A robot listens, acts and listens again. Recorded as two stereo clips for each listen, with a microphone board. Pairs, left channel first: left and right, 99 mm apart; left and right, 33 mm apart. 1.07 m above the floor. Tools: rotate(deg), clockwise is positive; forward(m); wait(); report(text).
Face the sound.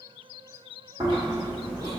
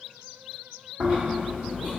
rotate(45)
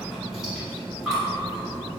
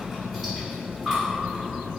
report("Facing the chewing, 1 to 2 m away.")